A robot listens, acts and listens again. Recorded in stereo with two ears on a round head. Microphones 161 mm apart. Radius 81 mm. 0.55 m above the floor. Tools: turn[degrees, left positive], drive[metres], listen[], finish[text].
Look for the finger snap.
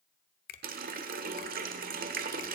Thought: The finger snap: about 50° left or 130° left.
Action: turn[50]
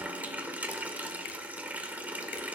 Action: listen[]
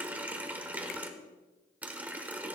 Action: listen[]
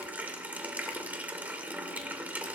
Action: finish[I heard a finger snap, but can't make it out now. It was about straight ahead or 80° left.]